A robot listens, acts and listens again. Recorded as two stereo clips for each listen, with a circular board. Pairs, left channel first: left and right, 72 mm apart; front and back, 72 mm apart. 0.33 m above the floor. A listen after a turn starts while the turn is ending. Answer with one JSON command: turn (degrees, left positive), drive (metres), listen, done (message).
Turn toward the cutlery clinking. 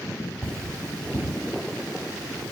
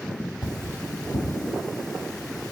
{"turn": 20}
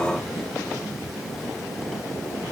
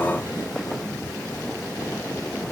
{"listen": true}
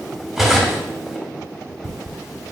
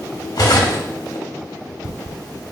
{"done": "Facing the cutlery clinking, under 1 m away."}